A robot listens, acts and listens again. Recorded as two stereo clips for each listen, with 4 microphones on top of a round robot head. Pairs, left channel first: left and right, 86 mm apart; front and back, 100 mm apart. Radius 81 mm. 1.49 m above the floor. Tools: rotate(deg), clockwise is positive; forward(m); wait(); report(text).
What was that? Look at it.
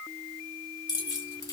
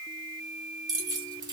rotate(-130)
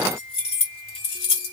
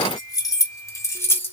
rotate(-65)
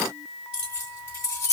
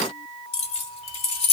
rotate(-15)
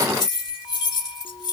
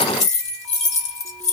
report("Facing the keys jangling, 1 to 2 m away.")